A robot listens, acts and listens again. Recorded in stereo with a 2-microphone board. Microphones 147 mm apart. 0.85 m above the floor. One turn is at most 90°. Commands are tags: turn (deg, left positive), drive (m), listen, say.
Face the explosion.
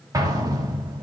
<turn deg="-25"/>
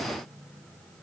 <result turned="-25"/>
<listen/>
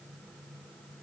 <say>I heard an explosion, but can't make it out now. It was about straight ahead or 130° right.</say>